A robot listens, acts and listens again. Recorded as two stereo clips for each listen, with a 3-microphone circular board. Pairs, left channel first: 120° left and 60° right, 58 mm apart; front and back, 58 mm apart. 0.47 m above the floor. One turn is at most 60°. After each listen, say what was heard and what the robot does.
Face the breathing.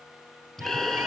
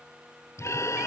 The breathing: 35° left. Turn 35° left.
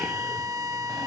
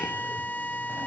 Keep listening.
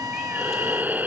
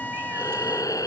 Found it: breathing, straight ahead.